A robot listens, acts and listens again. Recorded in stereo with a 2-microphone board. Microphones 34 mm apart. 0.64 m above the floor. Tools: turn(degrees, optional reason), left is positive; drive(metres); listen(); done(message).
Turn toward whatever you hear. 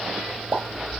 turn(degrees=-60, reason="The pop: about 60° right or 120° right.")
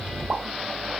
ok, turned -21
listen()
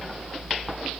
done("I heard a pop, but can't make it out now. It was about 40° right or 100° right.")